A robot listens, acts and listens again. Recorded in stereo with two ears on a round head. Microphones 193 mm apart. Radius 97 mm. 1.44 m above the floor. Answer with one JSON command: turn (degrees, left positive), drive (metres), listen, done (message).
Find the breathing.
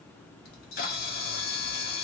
{"listen": true}
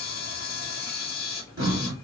{"turn": -60}
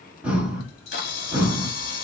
{"done": "Found it: breathing, straight ahead, 1 to 2 m away."}